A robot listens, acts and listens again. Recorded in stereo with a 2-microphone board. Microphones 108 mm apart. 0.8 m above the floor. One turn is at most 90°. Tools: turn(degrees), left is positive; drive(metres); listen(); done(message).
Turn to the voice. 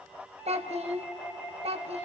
turn(degrees=-75)
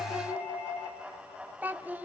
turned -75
turn(degrees=-15)
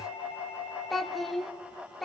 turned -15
done("Facing the child speaking.")